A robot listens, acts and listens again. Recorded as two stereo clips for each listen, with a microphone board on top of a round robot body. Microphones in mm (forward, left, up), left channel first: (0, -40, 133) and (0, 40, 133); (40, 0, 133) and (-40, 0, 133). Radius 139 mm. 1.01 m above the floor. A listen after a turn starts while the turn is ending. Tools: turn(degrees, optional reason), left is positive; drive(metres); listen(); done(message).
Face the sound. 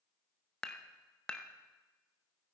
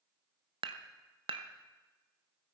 turn(degrees=-170, reason="The dishes clattering: 170° right.")
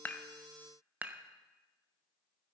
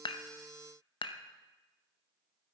turn(degrees=20, reason="The dishes clattering is now 20° left.")
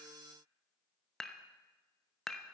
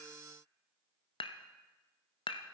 done("Facing the dishes clattering.")